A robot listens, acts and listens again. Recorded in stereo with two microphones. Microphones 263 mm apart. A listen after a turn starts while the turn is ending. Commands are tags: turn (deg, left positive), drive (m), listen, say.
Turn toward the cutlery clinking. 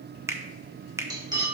<turn deg="-15"/>
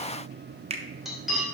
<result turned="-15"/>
<say>Facing the cutlery clinking.</say>